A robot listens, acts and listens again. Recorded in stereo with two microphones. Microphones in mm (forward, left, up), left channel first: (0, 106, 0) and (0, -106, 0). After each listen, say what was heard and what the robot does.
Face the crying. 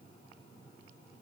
Keep listening.
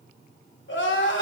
The crying: about 65° left or 115° left. Turn 65° left.
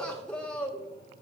Found it: crying, straight ahead, 1 to 2 m away.